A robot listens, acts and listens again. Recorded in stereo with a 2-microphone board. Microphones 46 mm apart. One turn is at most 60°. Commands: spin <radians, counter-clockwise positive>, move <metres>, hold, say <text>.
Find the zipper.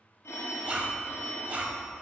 spin -0.44
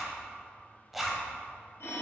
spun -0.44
say Found it: a zipper, straight ahead, under 1 m away.